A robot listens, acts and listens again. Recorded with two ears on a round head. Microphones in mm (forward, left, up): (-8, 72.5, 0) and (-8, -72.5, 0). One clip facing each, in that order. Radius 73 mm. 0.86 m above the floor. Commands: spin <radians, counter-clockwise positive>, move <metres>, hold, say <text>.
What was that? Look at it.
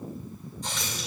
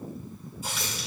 spin -0.52
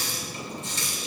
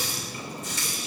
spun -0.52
spin 0.44
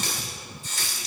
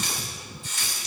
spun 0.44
spin 0.61
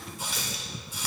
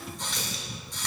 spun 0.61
say Facing the running tap.